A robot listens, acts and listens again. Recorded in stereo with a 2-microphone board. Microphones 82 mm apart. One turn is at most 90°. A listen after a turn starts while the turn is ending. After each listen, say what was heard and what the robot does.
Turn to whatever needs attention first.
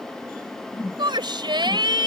The shout: about 70° right or 110° right. Turn 70° right.
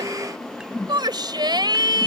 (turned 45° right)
So it is at 60° right. Turn 60° right.
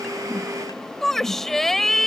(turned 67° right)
Found it: a shout, straight ahead.